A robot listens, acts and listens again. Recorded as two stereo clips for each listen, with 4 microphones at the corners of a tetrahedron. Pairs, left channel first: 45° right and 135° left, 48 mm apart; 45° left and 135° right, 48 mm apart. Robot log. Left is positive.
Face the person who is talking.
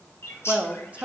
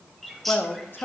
note: The man speaking: 80° left.
cmd yaw +80
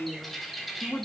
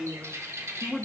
note: The man speaking is now 15° right.
cmd yaw -15
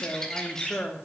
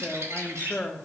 end: Found it: a man speaking, straight ahead.